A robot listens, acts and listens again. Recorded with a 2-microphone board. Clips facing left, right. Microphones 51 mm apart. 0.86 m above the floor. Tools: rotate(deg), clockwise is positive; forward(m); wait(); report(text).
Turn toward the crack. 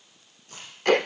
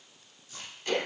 rotate(-65)
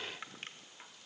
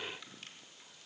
wait()
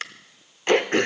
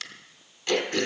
report("I heard a crack, but can't make it out now. It was about straight ahead or 50° left.")